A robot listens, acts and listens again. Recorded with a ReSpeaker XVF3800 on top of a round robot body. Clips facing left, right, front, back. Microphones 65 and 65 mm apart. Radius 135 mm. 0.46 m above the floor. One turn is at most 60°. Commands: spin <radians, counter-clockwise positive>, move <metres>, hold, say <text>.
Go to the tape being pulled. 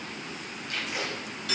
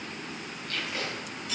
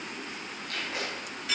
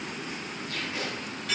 spin 0.26
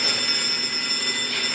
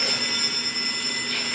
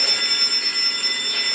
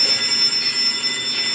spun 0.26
hold
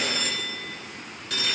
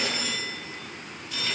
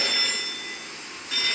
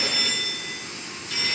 hold
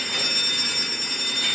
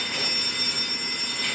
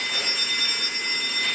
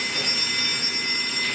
say Facing where the tape being pulled came from. I can't hear it now. I did not reach it.